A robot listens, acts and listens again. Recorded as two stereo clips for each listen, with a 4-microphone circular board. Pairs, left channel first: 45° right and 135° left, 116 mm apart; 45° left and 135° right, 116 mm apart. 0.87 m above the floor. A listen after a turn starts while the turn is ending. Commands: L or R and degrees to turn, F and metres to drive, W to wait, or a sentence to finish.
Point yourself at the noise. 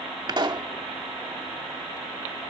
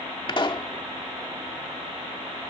L90
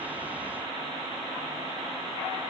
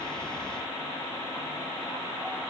Facing where the pop came from. I can't hear it now.